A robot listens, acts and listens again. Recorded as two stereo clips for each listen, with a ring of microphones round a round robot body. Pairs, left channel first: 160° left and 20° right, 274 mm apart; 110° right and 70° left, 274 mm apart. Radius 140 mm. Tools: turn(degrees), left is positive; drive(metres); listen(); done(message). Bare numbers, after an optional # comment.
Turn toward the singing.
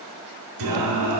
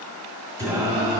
done("Found it: singing, straight ahead.")